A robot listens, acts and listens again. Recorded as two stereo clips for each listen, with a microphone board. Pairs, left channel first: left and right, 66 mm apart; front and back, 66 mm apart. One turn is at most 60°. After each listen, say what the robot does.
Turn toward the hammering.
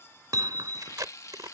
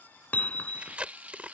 Turn 60° right.
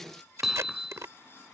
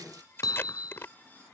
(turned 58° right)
Turn 10° right.
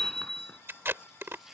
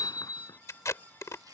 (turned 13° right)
Found it: hammering, straight ahead.